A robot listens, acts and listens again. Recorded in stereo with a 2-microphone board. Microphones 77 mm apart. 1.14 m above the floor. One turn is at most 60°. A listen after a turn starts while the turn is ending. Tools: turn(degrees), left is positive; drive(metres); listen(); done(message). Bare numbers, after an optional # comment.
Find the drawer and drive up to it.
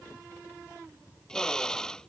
listen()
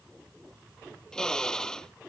listen()
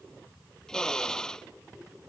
done("I can't make out a drawer to turn to.")